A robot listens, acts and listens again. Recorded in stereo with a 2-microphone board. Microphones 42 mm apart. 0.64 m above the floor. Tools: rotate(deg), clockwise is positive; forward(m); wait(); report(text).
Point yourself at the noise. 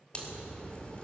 rotate(-25)
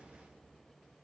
wait()
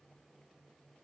report("I heard a crack, but can't make it out now. It was about straight ahead or 130° left.")